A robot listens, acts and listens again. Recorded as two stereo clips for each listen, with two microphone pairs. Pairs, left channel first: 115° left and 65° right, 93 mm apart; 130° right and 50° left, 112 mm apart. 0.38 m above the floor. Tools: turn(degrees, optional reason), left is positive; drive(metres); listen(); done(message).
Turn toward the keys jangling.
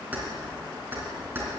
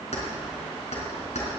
turn(degrees=-135, reason="The keys jangling: 135° right.")
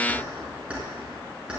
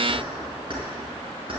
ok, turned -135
turn(degrees=15, reason="The keys jangling is now 15° left.")
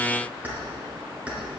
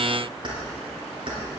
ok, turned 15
turn(degrees=10, reason="The keys jangling is now 10° left.")
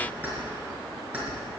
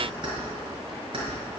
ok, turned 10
turn(degrees=10, reason="The keys jangling is now 10° left.")
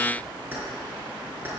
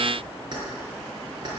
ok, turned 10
done("Found it: keys jangling, straight ahead, over 4 m away.")